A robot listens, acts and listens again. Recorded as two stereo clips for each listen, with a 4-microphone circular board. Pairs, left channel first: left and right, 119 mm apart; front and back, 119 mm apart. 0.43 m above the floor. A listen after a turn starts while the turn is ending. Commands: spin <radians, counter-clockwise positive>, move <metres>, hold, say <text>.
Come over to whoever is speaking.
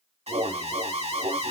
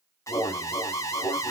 hold
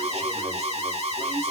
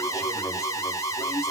hold
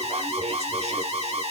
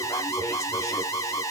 say I can't make out anyone speaking to turn to.